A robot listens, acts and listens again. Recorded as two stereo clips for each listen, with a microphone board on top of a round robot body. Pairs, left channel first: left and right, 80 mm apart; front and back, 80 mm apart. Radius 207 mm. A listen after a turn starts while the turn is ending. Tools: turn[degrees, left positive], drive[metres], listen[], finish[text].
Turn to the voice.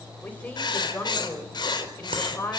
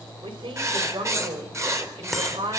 Thought: The woman speaking: 160° left.
Action: turn[160]
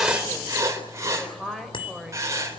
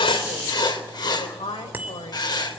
Action: finish[Found it: a woman speaking, straight ahead.]